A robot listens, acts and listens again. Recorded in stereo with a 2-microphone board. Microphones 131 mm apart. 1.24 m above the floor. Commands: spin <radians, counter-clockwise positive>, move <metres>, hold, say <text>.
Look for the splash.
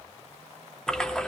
spin 0.52
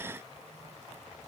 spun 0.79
hold
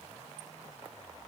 say I heard a splash, but can't make it out now. It was about 40° right or 130° left.